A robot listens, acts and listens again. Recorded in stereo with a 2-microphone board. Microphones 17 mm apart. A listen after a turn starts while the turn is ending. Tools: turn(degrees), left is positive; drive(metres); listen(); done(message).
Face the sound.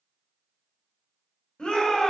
turn(degrees=65)
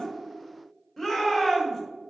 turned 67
turn(degrees=20)
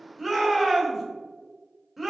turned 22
done("Facing the shout.")